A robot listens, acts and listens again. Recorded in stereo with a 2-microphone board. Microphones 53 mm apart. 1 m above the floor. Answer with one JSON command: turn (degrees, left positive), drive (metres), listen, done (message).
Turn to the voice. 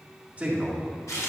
{"turn": -20}
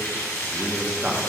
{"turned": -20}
{"turn": -15}
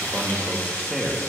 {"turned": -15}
{"turn": 30}
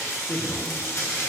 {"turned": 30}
{"turn": 130}
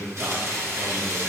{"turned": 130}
{"turn": -80}
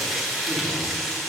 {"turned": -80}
{"listen": true}
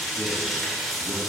{"listen": true}
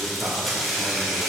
{"done": "Facing where the man speaking came from. I can't hear it now."}